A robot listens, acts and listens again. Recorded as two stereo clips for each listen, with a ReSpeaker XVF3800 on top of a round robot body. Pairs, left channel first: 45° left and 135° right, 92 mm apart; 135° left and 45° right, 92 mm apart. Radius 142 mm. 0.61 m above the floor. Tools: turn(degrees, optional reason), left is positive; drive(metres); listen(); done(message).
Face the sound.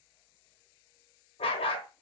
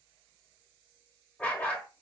turn(degrees=60, reason="The dog barking: 60° left.")
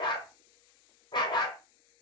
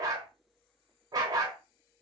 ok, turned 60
done("Facing the dog barking, 1 to 2 m away.")